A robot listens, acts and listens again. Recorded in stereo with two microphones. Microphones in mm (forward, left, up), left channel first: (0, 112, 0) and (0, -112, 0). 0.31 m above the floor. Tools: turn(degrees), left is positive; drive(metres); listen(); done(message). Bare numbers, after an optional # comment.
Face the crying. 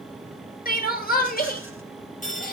# The crying: about 40° left or 140° left.
turn(40)
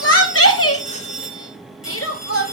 # So it is at 100° left.
turn(100)
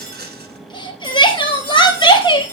# The crying is now 20° left.
turn(20)
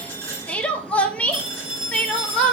done("Found it: crying, straight ahead.")